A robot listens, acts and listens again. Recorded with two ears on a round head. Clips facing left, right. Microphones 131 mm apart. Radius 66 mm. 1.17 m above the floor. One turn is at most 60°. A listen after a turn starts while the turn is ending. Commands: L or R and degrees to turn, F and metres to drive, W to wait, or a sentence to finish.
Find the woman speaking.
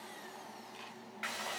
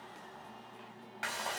W
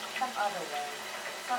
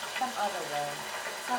R35
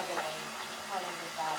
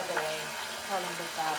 R60
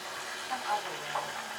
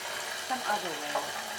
R50
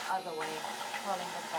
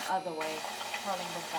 Facing the woman speaking.